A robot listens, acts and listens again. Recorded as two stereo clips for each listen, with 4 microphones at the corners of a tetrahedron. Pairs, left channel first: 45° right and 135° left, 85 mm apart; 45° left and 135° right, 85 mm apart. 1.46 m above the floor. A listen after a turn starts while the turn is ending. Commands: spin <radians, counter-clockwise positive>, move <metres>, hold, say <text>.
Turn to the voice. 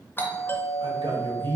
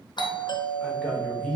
spin 2.18
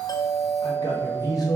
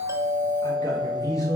say Found it: a man speaking, straight ahead.